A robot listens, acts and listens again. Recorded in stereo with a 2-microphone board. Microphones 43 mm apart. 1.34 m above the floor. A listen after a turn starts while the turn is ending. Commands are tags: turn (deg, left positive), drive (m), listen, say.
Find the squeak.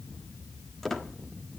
<turn deg="30"/>
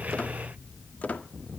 <turn deg="140"/>
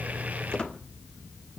<turn deg="25"/>
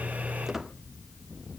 <say>Found it: a squeak, straight ahead.</say>